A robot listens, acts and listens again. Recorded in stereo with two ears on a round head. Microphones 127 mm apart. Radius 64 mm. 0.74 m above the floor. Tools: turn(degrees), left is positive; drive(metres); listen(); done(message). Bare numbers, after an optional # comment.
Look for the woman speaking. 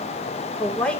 turn(30)
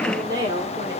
# So it is at 30° right.
turn(-30)
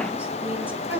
# The woman speaking is now 15° right.
turn(-15)
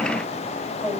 done("Facing the woman speaking, 2 to 4 m away.")